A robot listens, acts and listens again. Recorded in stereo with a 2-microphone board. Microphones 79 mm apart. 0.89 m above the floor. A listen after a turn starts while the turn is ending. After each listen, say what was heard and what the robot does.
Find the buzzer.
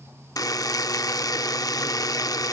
The buzzer: about 50° left or 130° left. Turn 50° left.
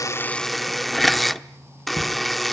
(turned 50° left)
Found it: a buzzer, straight ahead, under 1 m away.